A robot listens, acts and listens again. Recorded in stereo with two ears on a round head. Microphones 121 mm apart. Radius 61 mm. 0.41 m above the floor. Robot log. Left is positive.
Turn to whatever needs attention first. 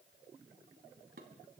cmd idle
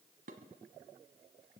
cmd idle
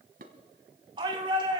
note: The shout: about 35° right or 145° right.
cmd yaw -35
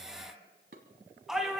end: Facing the shout.